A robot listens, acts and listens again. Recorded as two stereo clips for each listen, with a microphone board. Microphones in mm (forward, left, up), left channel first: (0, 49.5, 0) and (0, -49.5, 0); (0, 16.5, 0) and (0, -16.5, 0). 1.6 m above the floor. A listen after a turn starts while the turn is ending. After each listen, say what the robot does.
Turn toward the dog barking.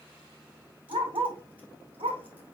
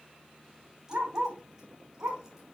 Turn 70° right.
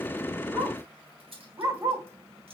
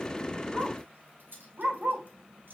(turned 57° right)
Turn 30° right.
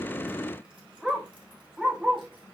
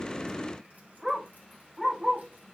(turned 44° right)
Turn 15° right.
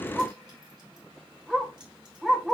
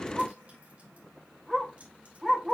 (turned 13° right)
Found it: a dog barking, straight ahead, 2 to 4 m away.